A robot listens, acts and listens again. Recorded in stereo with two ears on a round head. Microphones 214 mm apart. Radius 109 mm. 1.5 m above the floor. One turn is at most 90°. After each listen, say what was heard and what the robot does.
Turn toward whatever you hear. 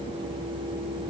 Keep listening.
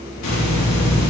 Turn 90° left.
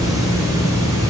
So it is at 15° right. Turn 15° right.
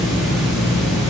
Facing the hiss, 2 to 4 m away.